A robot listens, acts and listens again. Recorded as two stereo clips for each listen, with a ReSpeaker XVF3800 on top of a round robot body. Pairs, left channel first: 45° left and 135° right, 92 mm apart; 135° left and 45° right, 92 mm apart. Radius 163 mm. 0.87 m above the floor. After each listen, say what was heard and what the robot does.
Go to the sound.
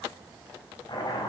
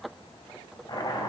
The chopping: 90° left. Turn 90° left.
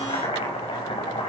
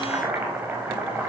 The chopping is now 25° left. Turn 25° left.
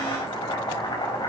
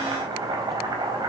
Drive 1.0 m forward.
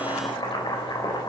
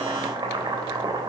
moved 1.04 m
Drive 1.0 m forward.
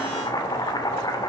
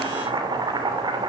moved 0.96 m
Drive 1.0 m forward.
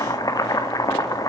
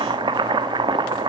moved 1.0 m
The chopping is now 10° right. Turn 10° right.
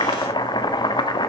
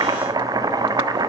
Drive 1.0 m forward.
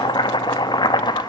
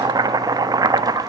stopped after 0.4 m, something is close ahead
Arrived at the chopping, straight ahead.